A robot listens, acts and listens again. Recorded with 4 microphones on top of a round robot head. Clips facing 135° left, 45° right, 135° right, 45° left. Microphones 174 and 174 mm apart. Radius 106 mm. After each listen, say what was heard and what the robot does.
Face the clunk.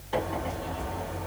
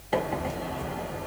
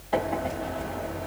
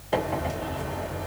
Keep listening.
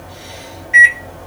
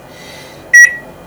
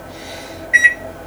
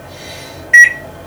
Keep listening.
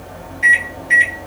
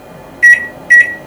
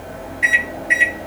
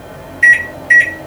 I can't make out a clunk to turn to.